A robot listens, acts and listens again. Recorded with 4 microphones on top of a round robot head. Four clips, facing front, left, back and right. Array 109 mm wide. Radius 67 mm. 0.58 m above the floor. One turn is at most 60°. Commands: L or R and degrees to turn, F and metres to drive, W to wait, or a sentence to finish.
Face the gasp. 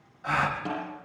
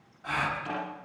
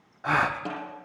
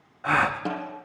R60
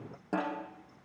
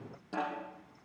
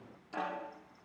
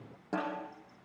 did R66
R60
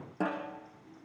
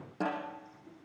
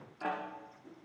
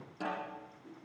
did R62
I heard a gasp from this way, but can't make it out now.